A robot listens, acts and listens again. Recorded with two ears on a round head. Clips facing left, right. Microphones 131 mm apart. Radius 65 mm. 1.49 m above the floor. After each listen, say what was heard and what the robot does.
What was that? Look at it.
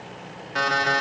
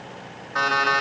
The alarm clock: about 25° left or 155° left. Turn 25° left.
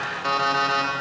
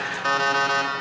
Found it: an alarm clock, straight ahead, 1 to 2 m away.